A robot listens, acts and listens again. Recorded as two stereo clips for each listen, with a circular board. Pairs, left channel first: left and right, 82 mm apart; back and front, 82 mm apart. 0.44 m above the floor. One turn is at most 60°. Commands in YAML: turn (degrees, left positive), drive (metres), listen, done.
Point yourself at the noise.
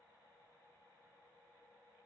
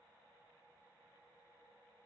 listen: true
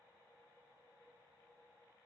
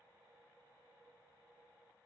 listen: true
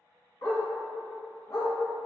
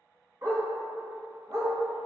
turn: 55
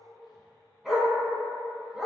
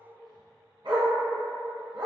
done: "Facing the dog barking."